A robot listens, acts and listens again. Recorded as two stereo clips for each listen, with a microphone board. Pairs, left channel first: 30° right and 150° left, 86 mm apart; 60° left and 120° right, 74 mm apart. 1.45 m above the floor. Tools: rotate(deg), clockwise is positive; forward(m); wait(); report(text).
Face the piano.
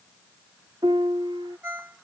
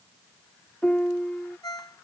rotate(-135)
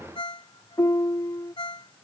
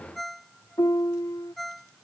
rotate(-20)
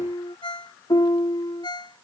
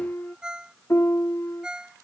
report("Facing the piano.")